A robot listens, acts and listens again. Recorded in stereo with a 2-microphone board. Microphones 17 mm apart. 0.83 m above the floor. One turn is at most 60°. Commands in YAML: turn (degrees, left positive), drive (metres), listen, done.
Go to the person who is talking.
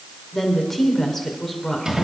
turn: 20
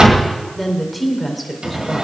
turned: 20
drive: 1.0
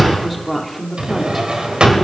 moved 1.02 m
drive: 1.0
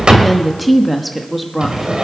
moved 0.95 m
drive: 1.0
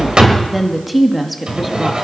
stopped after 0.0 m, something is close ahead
done: "I am next to the woman speaking."